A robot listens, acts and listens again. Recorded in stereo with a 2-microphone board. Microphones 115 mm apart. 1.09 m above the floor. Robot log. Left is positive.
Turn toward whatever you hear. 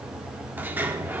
note: The sliding door: about 15° right or 165° right.
cmd yaw -15
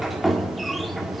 end: Found it: a sliding door, straight ahead, 1 to 2 m away.